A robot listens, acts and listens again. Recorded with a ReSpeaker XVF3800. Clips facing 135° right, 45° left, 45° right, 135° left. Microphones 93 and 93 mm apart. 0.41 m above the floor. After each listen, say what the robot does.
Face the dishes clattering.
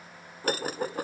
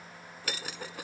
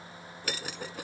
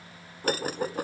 Turn 180° left.
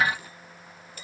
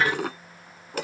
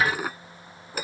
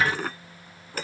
Turn 35° left.
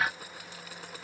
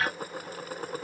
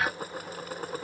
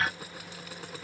Facing the dishes clattering.